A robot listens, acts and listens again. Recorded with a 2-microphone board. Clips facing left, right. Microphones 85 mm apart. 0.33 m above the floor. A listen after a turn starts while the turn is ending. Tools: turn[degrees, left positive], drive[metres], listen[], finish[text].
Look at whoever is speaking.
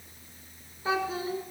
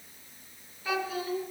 Thought: The child speaking: about 30° left or 150° left.
Action: turn[30]
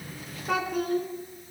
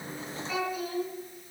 Thought: So it is at 120° left.
Action: turn[120]
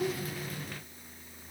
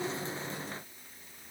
Action: listen[]
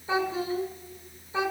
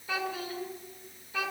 Thought: The child speaking is now 25° left.
Action: turn[25]
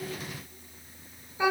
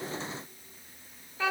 Thought: The child speaking is now 15° left.
Action: turn[15]
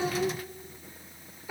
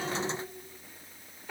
Thought: The child speaking is now 10° left.
Action: turn[10]
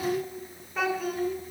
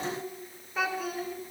Action: finish[Facing the child speaking, 2 to 4 m away.]